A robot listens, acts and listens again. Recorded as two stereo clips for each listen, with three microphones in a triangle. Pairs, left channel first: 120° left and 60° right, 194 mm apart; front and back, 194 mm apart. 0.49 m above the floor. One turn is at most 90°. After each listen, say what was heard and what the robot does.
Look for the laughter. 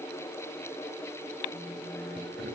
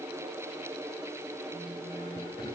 The laughter: 70° right. Turn 70° right.
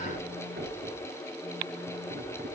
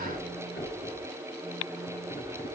The laughter is now 35° right. Turn 35° right.
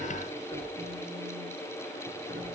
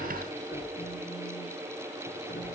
The laughter is now 20° right. Turn 20° right.
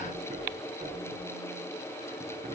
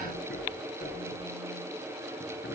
The laughter is now 10° right. Turn 10° right.
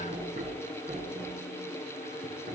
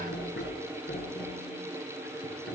Facing the laughter.